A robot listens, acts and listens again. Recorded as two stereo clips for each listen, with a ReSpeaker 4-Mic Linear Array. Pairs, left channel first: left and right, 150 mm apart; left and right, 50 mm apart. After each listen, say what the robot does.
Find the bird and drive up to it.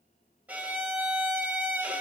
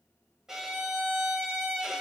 Keep listening.
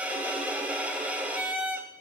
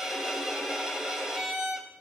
Keep listening.
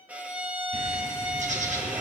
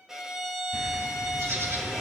Turn 55° right.
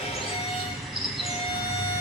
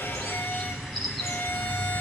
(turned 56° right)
Drive 1.0 m forward.
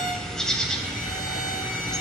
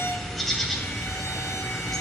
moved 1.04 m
Drive 1.0 m forward.
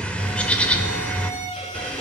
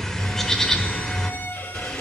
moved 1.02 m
Turn 10° left.
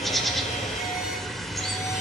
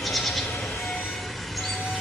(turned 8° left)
Drive 1.0 m forward.
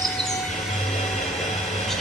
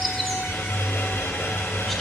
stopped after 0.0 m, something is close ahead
Arrived at the bird, straight ahead.